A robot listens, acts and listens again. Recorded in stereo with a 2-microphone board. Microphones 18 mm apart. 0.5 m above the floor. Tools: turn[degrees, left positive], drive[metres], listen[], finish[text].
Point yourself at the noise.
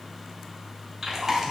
Thought: The chewing: about 20° right or 160° right.
Action: turn[-20]
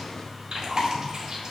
Thought: So it is at 145° right.
Action: turn[-145]
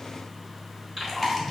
Thought: The chewing is now 20° right.
Action: turn[-20]
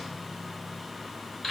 Action: finish[Found it: chewing, straight ahead, 2 to 4 m away.]